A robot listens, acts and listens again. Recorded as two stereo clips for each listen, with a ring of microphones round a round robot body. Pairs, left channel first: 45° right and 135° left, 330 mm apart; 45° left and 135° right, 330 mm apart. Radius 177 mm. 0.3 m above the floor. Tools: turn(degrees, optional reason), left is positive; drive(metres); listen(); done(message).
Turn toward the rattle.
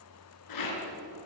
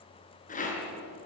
turn(degrees=-20, reason="The rattle: 20° right.")
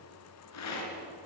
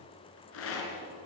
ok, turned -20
done("Found it: a rattle, straight ahead.")